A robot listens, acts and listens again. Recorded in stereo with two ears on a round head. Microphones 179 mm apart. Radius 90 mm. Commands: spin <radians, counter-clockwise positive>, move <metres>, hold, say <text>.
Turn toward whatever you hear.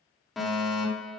spin 0.52
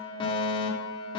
spin 2.62
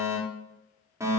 spin -0.26
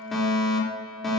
say Found it: a fire alarm, straight ahead.